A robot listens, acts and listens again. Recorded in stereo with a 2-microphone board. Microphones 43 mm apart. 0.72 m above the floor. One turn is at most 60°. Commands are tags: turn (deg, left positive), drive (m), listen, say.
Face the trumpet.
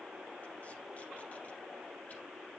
<listen/>
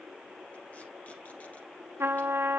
<turn deg="-60"/>
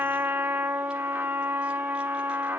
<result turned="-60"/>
<turn deg="-50"/>
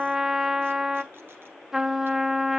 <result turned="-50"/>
<turn deg="-10"/>
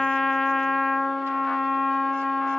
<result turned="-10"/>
<say>Facing the trumpet, under 1 m away.</say>